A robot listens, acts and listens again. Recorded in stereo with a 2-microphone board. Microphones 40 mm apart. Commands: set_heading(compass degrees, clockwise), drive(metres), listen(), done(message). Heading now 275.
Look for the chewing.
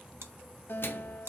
set_heading(345)
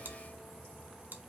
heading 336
set_heading(21)
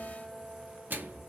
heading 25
listen()
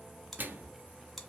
done("Found it: chewing, straight ahead.")